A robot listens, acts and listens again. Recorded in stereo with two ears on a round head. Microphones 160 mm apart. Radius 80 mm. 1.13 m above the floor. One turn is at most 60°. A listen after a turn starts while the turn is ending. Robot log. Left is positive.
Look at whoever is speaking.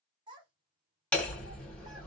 note: The child speaking: about 25° right or 155° right.
cmd yaw -25
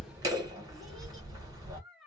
end: Found it: a child speaking, straight ahead.